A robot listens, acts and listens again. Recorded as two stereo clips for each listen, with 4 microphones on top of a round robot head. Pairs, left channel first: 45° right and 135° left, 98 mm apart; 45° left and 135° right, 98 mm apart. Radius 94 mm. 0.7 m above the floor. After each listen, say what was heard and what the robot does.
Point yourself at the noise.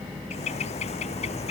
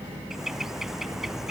The bird: 50° right. Turn 50° right.
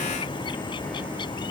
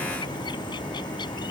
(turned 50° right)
Facing the bird.